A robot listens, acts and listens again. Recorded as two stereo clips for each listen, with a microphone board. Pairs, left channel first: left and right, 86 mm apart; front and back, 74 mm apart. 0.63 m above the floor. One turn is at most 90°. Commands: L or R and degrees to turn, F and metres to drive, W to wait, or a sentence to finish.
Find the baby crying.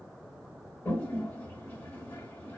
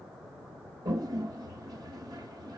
W
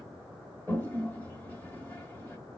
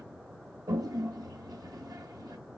W
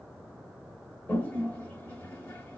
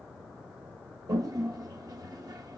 I can't make out a baby crying, only a toilet flushing.